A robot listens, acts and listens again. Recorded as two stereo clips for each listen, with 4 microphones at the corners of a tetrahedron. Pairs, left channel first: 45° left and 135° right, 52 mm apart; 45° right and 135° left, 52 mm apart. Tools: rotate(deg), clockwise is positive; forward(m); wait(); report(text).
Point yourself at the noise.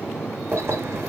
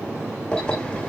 rotate(110)
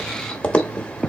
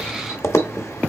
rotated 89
rotate(20)
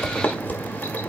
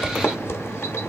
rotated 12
rotate(10)
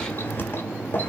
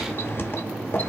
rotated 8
report("Facing the keys jangling.")